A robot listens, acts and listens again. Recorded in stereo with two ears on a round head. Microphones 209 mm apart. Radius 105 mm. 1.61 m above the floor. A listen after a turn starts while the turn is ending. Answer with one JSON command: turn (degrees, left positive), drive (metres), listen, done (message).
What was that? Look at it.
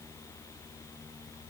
{"listen": true}
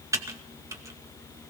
{"turn": -30}
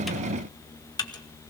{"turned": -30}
{"turn": 20}
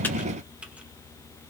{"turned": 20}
{"listen": true}
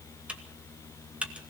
{"done": "Facing the typing on a keyboard."}